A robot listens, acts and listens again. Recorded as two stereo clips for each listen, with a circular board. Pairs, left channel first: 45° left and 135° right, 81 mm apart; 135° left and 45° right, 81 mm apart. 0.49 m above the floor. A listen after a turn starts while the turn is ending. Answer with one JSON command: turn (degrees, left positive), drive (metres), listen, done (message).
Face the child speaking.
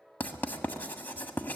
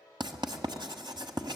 {"listen": true}
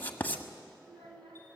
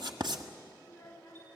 {"turn": -150}
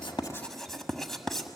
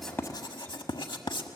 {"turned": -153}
{"listen": true}
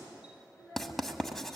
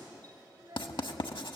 {"turn": -10}
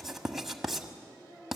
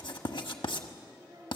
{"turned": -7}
{"done": "Facing the child speaking, over 4 m away."}